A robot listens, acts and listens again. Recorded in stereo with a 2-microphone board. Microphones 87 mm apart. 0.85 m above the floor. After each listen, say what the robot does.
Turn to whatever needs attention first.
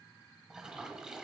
Keep listening.
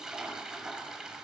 Keep listening.
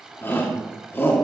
Turn 25° left.
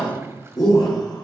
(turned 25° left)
Turn 130° left.
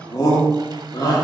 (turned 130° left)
Turn 50° left.
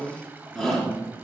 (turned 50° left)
Found it: a shout, straight ahead.